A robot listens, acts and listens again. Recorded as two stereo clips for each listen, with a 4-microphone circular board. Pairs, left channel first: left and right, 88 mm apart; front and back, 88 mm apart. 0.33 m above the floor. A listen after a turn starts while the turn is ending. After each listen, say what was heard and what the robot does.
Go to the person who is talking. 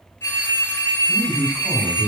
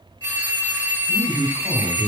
The man speaking: 175° right. Turn 175° right.
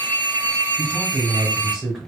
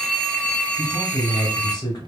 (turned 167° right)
The man speaking is now 10° right. Turn 10° right.
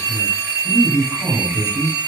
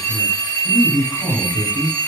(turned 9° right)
Drive 1.0 m forward.
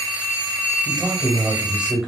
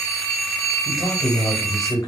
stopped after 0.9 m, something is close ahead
The man speaking is now 10° right. Turn 10° right.
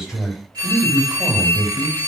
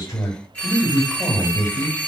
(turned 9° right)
Arrived at the man speaking, straight ahead.